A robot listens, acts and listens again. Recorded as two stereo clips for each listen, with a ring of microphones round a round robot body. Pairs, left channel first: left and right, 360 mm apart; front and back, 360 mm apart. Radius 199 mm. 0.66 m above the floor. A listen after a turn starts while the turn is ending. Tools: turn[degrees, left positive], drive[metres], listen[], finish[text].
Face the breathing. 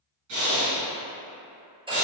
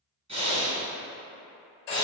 Thought: The breathing: 105° right.
Action: turn[-105]
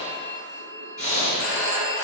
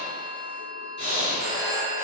Thought: The breathing is now 20° left.
Action: turn[20]
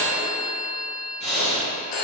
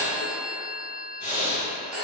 Action: finish[Found it: breathing, straight ahead, 2 to 4 m away.]